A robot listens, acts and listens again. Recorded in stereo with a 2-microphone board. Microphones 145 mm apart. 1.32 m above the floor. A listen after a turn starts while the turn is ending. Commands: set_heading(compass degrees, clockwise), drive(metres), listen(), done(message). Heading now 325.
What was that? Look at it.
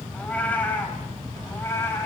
set_heading(305)
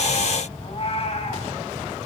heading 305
set_heading(170)
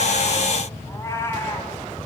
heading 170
set_heading(150)
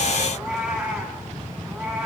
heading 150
done("Found it: a cat meowing, straight ahead, over 4 m away.")